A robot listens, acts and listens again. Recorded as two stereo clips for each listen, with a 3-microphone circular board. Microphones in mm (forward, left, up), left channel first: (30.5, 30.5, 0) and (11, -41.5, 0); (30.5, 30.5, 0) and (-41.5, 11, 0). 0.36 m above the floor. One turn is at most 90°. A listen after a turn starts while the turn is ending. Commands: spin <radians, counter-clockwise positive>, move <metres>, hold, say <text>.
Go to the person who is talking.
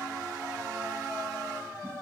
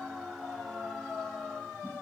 hold
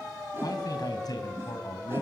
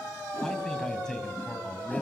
spin 1.57
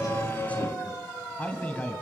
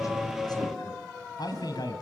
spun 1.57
move 1.0
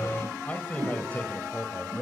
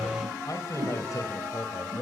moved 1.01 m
spin 0.26
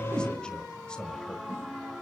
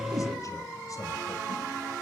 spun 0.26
hold
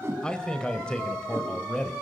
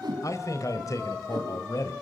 move 1.0
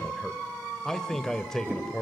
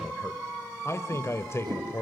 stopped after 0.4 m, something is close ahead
say I am next to the man speaking.